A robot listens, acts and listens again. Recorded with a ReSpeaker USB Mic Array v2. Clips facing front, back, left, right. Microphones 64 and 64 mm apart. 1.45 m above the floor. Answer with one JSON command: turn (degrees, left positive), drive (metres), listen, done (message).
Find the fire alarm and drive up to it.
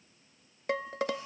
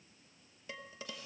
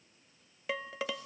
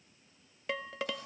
{"listen": true}
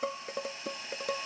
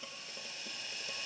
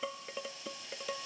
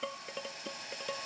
{"listen": true}
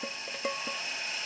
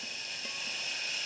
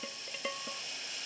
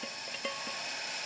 {"done": "I can't make out a fire alarm, only boiling and dishes clattering."}